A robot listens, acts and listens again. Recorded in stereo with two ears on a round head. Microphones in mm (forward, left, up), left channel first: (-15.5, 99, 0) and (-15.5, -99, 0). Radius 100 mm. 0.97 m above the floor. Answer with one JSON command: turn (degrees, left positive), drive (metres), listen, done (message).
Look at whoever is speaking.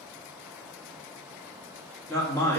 {"turn": 30}
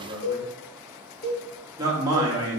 {"turn": -15}
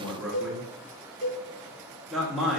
{"done": "Found it: a man speaking, straight ahead, 1 to 2 m away."}